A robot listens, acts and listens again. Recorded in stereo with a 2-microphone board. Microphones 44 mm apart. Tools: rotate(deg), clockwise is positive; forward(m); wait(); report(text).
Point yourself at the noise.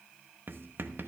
rotate(55)
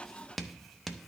report("Facing the writing, under 1 m away.")